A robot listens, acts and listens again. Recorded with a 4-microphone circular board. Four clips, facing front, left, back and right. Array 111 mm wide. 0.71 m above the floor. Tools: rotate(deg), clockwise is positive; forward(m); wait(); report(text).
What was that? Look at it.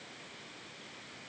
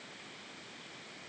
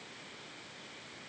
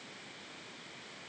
wait()
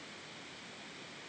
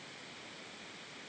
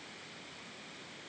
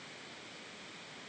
wait()
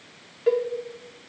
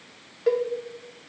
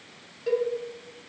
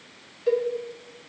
rotate(-60)
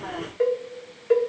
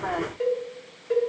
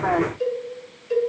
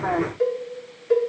report("Found it: a cowbell, straight ahead.")